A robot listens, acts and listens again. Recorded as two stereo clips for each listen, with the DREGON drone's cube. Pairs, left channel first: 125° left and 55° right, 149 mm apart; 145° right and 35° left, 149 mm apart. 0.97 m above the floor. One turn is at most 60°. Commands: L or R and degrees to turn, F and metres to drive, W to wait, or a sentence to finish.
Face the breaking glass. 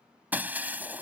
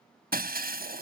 L25
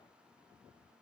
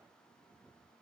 I heard breaking glass from this way, but can't make it out now.